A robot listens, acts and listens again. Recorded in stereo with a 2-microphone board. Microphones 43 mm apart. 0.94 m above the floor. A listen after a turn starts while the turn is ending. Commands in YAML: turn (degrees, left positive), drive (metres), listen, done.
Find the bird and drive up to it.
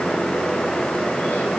listen: true
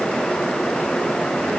listen: true
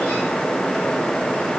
done: "I can't make out a bird."